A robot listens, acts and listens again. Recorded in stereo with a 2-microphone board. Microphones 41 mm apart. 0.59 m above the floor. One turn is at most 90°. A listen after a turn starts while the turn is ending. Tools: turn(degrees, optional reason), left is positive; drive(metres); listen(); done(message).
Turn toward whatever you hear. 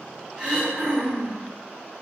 turn(degrees=-30)
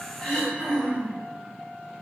turn(degrees=20, reason="So it is at 20° left.")
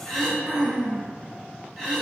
done("Facing the throat clearing.")